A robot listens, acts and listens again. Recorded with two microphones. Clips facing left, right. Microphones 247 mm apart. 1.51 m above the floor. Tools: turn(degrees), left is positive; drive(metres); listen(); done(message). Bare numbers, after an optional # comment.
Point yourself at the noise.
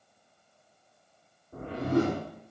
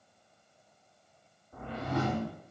# The whoosh: about 55° left or 125° left.
turn(55)
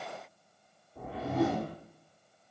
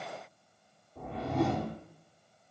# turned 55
done("Found it: a whoosh, straight ahead, 2 to 4 m away.")